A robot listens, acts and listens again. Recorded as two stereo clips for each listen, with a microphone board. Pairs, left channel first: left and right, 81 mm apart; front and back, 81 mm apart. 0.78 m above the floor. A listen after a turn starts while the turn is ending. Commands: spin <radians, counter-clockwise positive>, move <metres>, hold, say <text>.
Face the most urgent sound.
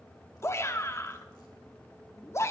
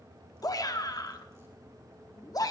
spin 0.61
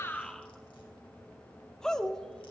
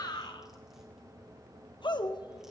spin 0.17
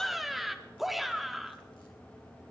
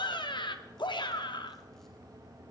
say Found it: a shout, straight ahead.